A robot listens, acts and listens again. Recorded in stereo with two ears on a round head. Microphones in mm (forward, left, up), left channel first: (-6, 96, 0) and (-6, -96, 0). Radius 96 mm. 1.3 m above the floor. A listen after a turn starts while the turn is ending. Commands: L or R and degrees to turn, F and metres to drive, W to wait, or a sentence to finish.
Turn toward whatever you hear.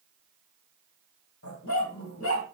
L75
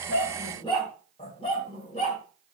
L30
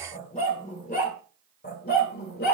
L50
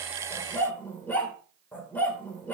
L10
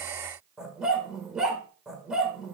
Found it: a dog barking, straight ahead, 1 to 2 m away.